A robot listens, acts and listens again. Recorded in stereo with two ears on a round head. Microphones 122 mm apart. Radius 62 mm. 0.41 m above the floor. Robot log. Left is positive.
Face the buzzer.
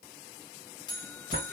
note: The buzzer: about 35° left or 145° left.
cmd yaw +35
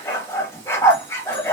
cmd idle
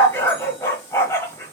cmd idle
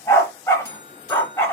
note: So it is at 110° left.
cmd yaw +110
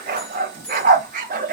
cmd idle
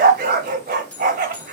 note: The buzzer is now 10° left.
cmd yaw +10
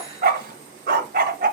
cmd idle
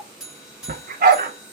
end: Found it: a buzzer, straight ahead.